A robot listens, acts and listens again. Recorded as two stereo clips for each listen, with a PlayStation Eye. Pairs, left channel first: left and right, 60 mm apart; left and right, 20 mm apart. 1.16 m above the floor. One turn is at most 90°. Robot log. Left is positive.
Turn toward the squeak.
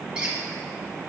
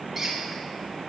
note: The squeak: about 15° right or 165° right.
cmd yaw -15
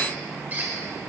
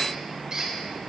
note: So it is at 150° right.
cmd yaw -90
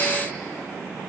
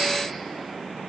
note: Nothing new. It was at 60° right.
cmd yaw -60
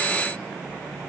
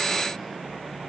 cmd idle
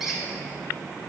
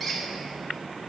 end: Found it: a squeak, straight ahead.